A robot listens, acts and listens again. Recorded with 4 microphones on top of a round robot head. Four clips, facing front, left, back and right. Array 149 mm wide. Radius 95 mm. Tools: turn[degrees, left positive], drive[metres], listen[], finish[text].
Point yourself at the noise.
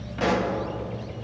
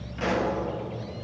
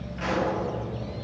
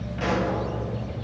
Action: finish[Found it: a pop, straight ahead, 1 to 2 m away.]